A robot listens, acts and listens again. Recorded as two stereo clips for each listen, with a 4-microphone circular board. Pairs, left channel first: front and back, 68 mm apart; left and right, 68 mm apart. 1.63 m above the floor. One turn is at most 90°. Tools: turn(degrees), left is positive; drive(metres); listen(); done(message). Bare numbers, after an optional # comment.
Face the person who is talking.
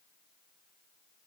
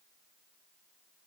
listen()
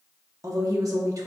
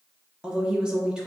# The woman speaking: 165° right.
turn(-90)
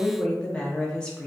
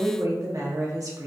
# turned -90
# The woman speaking is now 75° right.
turn(-75)
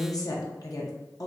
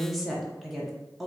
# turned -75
done("Facing the woman speaking.")